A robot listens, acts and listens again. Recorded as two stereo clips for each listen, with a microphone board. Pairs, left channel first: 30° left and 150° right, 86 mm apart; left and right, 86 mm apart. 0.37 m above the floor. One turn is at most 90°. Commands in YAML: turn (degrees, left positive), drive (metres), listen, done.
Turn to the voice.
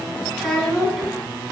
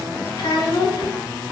turn: 90
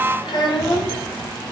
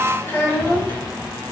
turn: 35
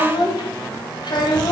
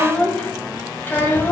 turn: 30
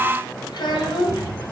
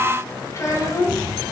turn: 45
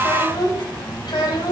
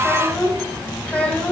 turn: 15
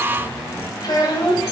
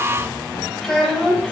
done: "Found it: a child speaking, straight ahead, 1 to 2 m away."